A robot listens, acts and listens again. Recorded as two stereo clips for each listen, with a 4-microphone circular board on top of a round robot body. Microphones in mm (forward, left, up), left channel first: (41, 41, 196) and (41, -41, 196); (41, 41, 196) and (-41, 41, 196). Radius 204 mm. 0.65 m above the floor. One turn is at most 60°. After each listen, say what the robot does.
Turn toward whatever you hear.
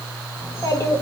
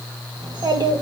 Turn 60° left.
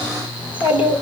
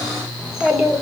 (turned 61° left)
Turn 60° left.
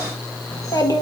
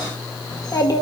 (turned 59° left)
Turn 45° left.
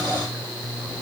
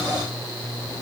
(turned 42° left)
Keep listening.
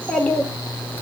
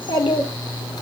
Turn 20° left.
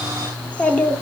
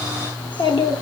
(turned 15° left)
Turn 15° left.
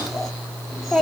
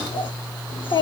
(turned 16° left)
Found it: a child speaking, straight ahead, 1 to 2 m away.